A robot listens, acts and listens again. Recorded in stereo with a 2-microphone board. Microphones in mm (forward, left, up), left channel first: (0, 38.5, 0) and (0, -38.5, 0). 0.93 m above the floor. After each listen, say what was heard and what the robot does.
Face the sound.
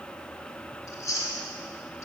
The chewing: about 35° left or 145° left. Turn 35° left.
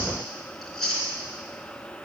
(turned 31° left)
Facing the chewing.